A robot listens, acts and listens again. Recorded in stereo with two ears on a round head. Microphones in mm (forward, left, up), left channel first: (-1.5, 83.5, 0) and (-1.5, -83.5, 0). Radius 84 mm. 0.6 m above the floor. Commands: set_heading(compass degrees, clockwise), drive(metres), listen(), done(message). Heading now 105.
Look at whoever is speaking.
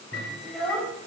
set_heading(75)
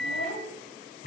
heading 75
set_heading(305)
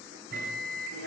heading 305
set_heading(20)
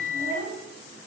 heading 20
set_heading(45)
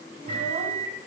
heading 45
listen()
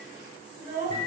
set_heading(60)
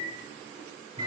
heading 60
listen()
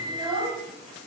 done("Facing the child speaking, 2 to 4 m away.")